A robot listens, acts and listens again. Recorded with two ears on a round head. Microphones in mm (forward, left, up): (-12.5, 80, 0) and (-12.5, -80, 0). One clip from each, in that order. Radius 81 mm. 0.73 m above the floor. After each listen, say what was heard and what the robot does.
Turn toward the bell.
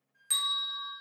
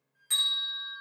The bell: about 30° left or 150° left. Turn 30° left.
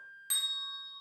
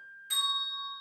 So it is at 115° left. Turn 115° left.
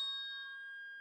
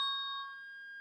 The bell is now 10° right. Turn 10° right.
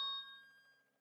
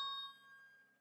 Found it: a bell, straight ahead, 1 to 2 m away.